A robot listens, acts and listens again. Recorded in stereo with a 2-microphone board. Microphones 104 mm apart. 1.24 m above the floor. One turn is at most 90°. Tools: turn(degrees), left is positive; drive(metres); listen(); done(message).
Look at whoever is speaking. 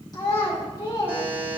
turn(degrees=40)
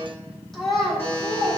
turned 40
done("Facing the child speaking, 1 to 2 m away.")